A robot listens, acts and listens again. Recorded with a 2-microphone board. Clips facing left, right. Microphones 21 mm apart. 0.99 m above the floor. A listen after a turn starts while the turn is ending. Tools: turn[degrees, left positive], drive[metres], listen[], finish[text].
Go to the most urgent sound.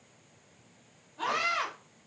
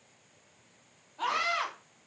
Thought: The scream: about 15° left or 165° left.
Action: turn[15]
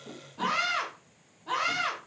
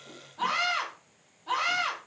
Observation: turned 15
Action: drive[1.0]
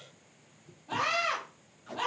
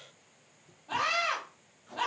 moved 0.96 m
Action: drive[1.0]
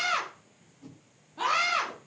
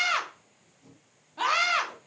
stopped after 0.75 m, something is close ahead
Thought: The scream is now 20° right.
Action: turn[-20]
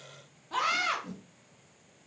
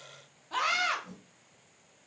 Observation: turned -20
Action: finish[Arrived at the scream, straight ahead.]